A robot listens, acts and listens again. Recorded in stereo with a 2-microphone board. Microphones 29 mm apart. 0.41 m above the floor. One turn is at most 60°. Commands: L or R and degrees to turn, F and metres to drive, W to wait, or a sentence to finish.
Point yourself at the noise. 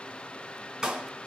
R20
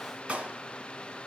R60
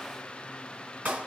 R60
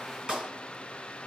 R30
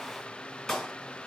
L10
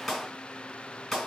Facing the clap, 2 to 4 m away.